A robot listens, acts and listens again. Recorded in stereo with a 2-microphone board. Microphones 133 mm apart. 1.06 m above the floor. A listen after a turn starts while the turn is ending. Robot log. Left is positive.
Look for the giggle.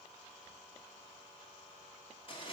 cmd idle
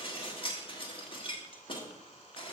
cmd idle
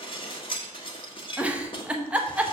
cmd yaw -30
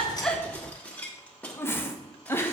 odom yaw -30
note: So it is at 20° left.
cmd yaw +20
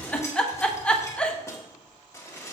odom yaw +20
note: The giggle is now 10° left.
cmd yaw +10
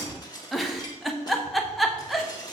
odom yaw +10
end: Found it: a giggle, straight ahead, under 1 m away.